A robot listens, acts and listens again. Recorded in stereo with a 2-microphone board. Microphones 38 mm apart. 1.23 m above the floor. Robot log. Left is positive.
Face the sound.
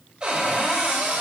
note: The cupboard door: about 25° right or 155° right.
cmd yaw -25
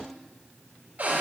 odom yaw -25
note: So it is at 130° right.
cmd yaw -130
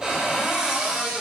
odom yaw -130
note: The cupboard door is now 15° right.
cmd yaw -15
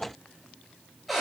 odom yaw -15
end: Facing the cupboard door.